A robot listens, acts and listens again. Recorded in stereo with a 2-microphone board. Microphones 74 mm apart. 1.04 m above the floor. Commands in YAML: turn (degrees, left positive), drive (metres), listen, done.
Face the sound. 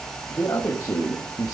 turn: 50
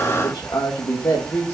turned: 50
turn: 35
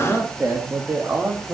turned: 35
turn: -25
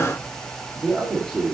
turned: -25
turn: -10
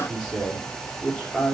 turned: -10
done: "Found it: a man speaking, straight ahead."